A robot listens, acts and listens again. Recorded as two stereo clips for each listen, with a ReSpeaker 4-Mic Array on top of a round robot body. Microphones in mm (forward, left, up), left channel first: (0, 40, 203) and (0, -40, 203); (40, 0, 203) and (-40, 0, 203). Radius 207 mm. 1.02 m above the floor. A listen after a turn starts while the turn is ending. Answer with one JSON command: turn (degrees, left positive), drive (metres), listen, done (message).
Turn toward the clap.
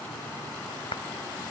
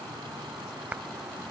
{"turn": 105}
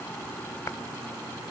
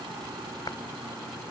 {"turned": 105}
{"listen": true}
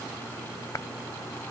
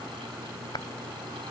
{"turn": 35}
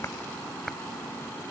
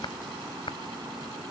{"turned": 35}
{"done": "Found it: a clap, straight ahead."}